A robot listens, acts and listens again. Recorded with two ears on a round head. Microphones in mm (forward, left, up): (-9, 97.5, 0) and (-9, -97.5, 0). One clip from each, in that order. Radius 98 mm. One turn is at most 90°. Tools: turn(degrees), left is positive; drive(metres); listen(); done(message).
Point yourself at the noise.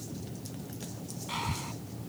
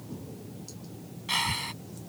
turn(degrees=-60)
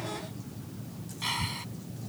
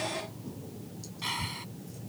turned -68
done("Found it: breathing, straight ahead.")